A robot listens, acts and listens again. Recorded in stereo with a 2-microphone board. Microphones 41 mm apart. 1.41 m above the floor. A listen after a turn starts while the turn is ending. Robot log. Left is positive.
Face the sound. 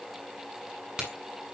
note: The crack: about 25° right or 155° right.
cmd yaw -25
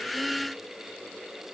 cmd idle
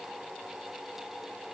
end: I heard a crack, but can't make it out now. It was about straight ahead or 130° right.